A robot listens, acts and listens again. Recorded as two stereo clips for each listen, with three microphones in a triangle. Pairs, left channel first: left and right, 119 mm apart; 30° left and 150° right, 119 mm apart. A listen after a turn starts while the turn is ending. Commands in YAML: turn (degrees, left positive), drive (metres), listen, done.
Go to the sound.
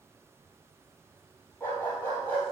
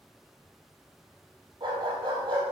turn: 165
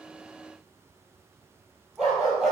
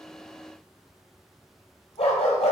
drive: 1.0
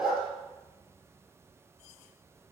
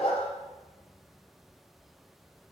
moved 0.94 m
drive: 1.0
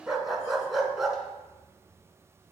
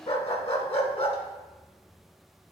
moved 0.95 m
drive: 1.0
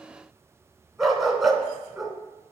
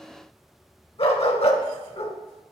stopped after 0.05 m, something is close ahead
done: "Arrived at the dog barking, straight ahead."